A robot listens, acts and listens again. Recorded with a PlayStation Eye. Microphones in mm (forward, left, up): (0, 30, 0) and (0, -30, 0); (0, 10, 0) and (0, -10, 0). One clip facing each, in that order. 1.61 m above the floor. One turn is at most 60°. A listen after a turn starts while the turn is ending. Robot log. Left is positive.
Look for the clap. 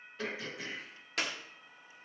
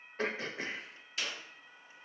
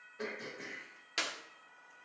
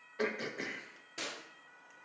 note: The clap: about 65° left or 115° left.
cmd yaw +60
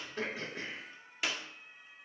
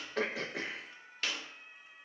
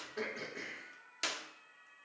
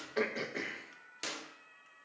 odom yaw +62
note: So it is at 10° left.
cmd yaw +10
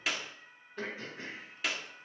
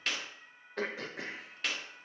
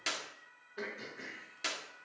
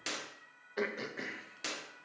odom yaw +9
end: Facing the clap, 1 to 2 m away.